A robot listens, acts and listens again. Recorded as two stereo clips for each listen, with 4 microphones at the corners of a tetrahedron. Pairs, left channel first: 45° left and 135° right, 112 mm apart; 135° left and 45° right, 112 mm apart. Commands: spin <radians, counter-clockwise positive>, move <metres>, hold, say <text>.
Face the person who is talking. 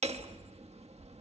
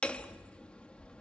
hold
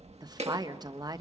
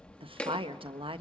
spin -1.40
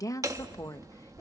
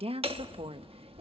spin -0.26
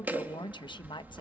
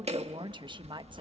say Found it: a woman speaking, straight ahead, 1 to 2 m away.